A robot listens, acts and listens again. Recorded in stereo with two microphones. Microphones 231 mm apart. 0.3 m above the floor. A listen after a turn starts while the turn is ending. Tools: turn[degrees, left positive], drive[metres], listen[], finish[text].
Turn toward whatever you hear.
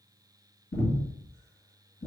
Thought: The breathing: about 65° left or 115° left.
Action: turn[65]
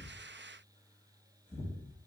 Thought: So it is at 30° left.
Action: turn[30]
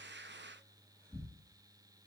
Action: finish[Found it: breathing, straight ahead, 1 to 2 m away.]